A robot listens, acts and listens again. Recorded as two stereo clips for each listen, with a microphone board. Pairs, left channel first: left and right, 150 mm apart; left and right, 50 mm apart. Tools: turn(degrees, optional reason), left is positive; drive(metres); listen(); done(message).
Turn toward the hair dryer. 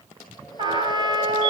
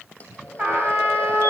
listen()
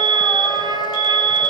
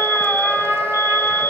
listen()
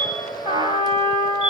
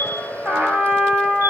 turn(degrees=25, reason="The hair dryer: about 25° left or 155° left.")
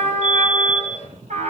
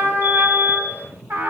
listen()
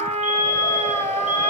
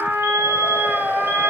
listen()
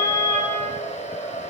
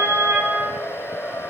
turn(degrees=130, reason="So it is at 130° left.")
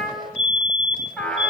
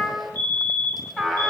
listen()
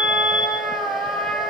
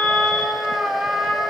listen()
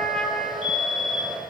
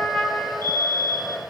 done("Found it: a hair dryer, straight ahead, over 4 m away.")